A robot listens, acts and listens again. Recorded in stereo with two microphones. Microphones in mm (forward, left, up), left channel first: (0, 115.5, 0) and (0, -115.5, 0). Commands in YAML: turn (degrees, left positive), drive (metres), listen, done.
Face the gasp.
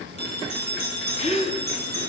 turn: 30
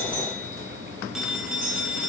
listen: true
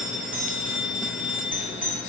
done: "I heard a gasp, but can't make it out now. It was about straight ahead or 120° left."